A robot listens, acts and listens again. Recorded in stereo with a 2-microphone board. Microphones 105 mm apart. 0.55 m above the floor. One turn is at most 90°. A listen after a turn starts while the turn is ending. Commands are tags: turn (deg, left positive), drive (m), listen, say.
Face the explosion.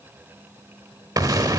<turn deg="-35"/>
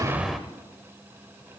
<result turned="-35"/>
<say>Found it: an explosion, straight ahead, under 1 m away.</say>